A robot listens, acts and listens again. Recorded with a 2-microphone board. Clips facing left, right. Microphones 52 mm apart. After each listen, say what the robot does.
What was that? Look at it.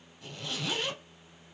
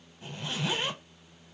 Turn 30° right.
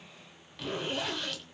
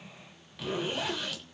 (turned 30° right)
Facing the zipper.